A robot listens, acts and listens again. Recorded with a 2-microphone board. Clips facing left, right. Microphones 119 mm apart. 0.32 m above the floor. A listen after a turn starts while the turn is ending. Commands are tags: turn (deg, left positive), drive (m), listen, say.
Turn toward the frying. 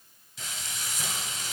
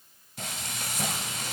<turn deg="-55"/>
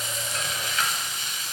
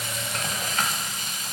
<turn deg="-55"/>
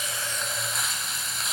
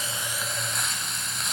<say>Found it: frying, straight ahead, under 1 m away.</say>